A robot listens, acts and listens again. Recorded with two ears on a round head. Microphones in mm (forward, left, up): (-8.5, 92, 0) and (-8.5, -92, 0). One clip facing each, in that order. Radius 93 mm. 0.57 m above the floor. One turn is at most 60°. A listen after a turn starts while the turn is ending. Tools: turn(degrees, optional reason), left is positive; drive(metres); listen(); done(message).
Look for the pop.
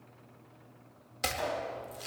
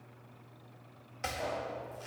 turn(degrees=60, reason="The pop: about 75° left or 105° left.")
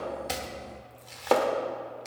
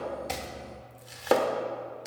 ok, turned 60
listen()
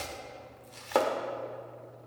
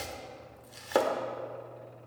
done("I heard a pop, but can't make it out now. It was about 15° left or 45° left.")